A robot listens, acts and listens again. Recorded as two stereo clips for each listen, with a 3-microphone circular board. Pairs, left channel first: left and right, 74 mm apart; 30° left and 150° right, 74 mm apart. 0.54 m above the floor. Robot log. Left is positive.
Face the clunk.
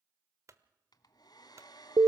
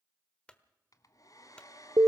note: The clunk: 45° right.
cmd yaw -45
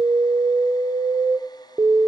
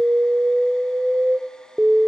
end: Facing where the clunk came from. I can't hear it now.